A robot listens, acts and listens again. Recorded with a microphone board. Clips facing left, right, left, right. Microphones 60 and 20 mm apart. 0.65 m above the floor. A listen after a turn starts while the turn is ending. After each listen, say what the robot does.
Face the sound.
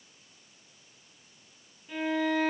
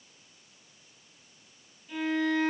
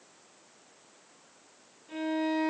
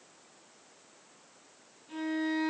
Turn 20° left.
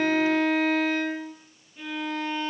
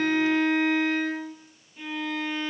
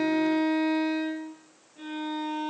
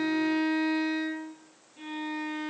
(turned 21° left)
Found it: a violin, straight ahead.